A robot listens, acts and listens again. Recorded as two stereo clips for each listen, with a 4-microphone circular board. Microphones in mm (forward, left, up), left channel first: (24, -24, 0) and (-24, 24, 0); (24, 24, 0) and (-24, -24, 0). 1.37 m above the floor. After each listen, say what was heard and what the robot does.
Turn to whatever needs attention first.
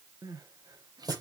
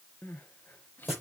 The crying: 110° left. Turn 110° left.
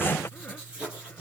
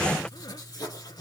Keep listening.
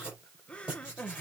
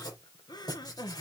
The crying is now 30° left. Turn 30° left.
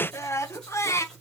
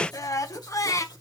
Facing the crying.